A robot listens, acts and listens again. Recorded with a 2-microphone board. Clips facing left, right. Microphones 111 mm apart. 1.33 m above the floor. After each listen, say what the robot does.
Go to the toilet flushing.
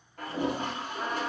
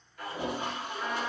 Turn 50° left.
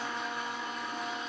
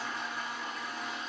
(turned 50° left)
Drive 1.0 m forward.
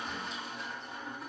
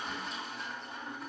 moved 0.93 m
Drive 1.0 m forward.
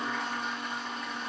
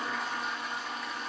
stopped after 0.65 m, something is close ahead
I am next to the toilet flushing.